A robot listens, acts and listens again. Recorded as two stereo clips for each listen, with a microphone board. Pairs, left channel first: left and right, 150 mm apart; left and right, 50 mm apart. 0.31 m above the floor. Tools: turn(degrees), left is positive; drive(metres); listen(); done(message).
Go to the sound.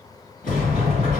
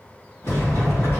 turn(degrees=60)
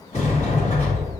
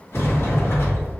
turn(degrees=50)
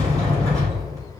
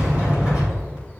turn(degrees=-20)
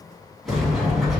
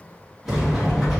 drive(metres=1.0)
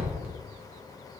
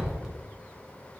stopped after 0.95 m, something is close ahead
turn(degrees=-10)
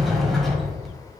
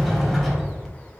done("I am next to the sliding door.")